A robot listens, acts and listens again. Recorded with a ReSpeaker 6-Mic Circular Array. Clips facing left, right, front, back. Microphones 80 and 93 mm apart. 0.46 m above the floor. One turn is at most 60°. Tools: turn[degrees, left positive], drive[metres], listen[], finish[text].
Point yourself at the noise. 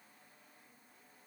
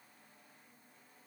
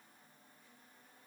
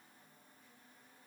Action: listen[]
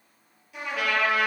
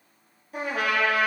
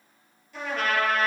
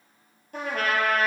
Thought: The trumpet: 135° right.
Action: turn[-60]
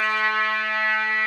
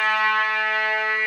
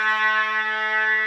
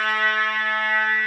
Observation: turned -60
Thought: The trumpet is now 65° right.
Action: turn[-60]
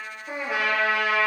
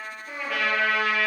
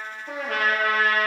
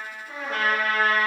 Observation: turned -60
Thought: The trumpet is now 25° left.
Action: turn[25]
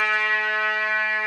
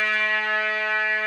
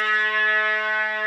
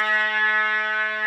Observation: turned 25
Thought: The trumpet is now 15° left.
Action: turn[15]
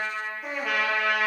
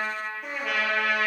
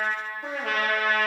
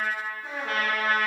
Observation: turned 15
Action: finish[Facing the trumpet.]